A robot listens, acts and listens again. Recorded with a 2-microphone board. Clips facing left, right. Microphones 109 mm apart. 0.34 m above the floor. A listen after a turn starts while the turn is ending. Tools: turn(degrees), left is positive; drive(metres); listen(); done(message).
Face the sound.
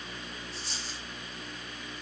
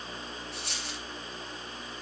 turn(degrees=-65)
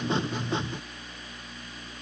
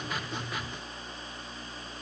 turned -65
listen()
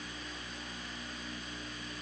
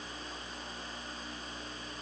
done("I heard a dropped coin, but can't make it out now. It was about straight ahead or 50° right.")